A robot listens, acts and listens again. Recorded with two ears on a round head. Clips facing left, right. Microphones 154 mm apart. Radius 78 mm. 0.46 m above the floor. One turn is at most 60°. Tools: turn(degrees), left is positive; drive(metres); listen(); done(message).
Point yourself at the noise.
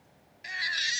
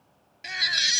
turn(degrees=-60)
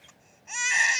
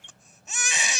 turn(degrees=-55)
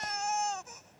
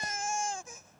turn(degrees=-15)
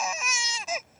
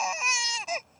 done("Found it: a baby crying, straight ahead.")